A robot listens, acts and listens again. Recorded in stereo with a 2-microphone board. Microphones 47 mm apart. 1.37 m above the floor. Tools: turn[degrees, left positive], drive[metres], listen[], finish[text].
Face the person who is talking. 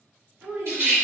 Thought: The child speaking: about 50° right or 130° right.
Action: turn[-50]
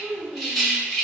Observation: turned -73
Thought: So it is at 60° right.
Action: turn[-60]
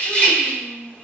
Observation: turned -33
Thought: The child speaking is now 25° right.
Action: turn[-25]
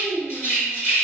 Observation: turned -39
Thought: The child speaking is now 15° left.
Action: turn[15]
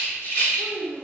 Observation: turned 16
Action: finish[Found it: a child speaking, straight ahead.]